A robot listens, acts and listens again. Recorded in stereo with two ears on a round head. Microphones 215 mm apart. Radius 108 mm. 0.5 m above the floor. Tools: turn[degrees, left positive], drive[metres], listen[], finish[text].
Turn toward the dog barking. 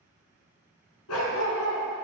Thought: The dog barking: about 75° left or 105° left.
Action: turn[75]
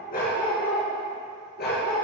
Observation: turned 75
Thought: So it is at 45° left.
Action: turn[45]
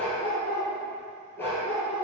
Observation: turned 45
Thought: The dog barking is now 10° left.
Action: turn[10]
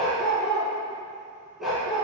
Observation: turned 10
Action: finish[Found it: a dog barking, straight ahead, 2 to 4 m away.]